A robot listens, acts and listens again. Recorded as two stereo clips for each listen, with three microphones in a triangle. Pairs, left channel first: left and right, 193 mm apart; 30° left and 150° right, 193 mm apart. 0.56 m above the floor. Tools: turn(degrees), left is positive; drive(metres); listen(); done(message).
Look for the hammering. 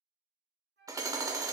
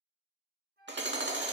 turn(degrees=-160)
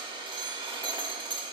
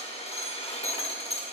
turn(degrees=-30)
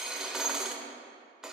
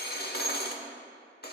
done("Facing the hammering, 1 to 2 m away.")